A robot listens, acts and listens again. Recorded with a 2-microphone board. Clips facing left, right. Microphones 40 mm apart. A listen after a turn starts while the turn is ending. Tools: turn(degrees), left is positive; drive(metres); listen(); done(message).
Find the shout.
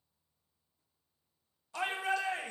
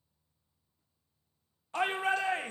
turn(degrees=-40)
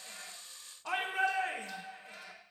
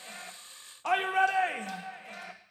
turn(degrees=-95)
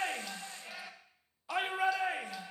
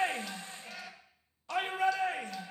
turn(degrees=10)
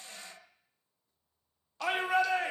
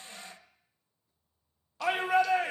done("Found it: a shout, straight ahead, 1 to 2 m away.")